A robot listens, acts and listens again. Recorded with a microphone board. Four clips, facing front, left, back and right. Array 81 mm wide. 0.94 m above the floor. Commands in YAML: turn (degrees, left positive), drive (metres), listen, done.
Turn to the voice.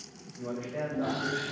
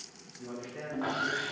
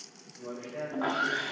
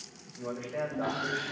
turn: -85
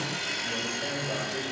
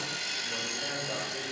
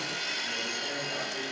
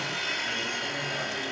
listen: true
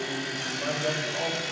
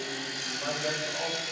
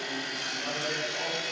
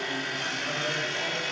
listen: true
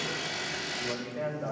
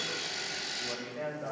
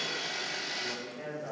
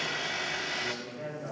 turn: 20
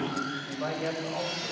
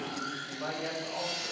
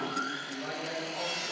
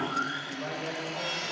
done: "Facing the man speaking, over 4 m away."